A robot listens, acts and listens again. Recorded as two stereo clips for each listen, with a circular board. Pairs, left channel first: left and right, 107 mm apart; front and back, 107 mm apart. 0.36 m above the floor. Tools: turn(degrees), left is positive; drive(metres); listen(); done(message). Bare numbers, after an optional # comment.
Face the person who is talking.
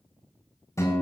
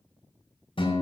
listen()
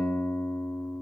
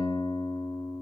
listen()
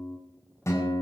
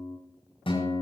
done("I can't make out anyone speaking to turn to.")